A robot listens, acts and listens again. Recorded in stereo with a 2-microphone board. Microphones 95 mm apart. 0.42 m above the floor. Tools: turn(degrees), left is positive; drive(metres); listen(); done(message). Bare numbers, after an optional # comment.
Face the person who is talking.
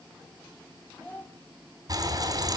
# The child speaking: about 20° left or 160° left.
turn(20)
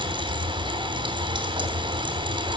listen()
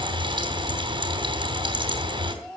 done("Facing the child speaking.")